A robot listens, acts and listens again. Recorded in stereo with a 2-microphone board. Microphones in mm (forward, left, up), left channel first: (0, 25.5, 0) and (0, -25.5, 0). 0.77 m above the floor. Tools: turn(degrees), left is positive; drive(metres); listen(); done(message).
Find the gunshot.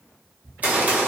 turn(degrees=-30)
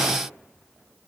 listen()
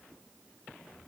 done("I heard a gunshot, but can't make it out now. It was about straight ahead or 120° right.")